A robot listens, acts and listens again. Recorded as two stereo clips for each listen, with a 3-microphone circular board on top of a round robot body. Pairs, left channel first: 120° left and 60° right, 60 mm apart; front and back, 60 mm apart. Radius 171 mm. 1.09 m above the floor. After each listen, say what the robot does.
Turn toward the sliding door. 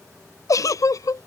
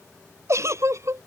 Keep listening.
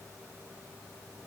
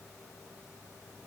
Keep listening.
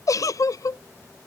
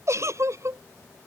I can't make out a sliding door to turn to.